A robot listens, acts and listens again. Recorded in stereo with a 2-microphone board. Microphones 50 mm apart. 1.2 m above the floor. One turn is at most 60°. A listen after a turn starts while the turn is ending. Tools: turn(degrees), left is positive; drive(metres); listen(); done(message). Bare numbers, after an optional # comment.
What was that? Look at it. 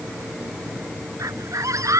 turn(-60)
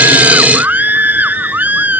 # So it is at 35° right.
turn(-35)
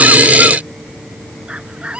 # The scream is now 20° right.
turn(-20)
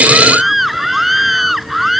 done("Found it: a scream, straight ahead.")